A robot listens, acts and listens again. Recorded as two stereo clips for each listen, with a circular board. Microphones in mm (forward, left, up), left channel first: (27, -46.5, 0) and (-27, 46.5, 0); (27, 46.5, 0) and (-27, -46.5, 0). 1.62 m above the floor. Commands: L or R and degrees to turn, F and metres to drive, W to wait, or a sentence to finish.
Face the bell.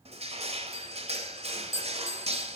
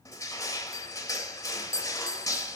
Found it: a bell, straight ahead, under 1 m away.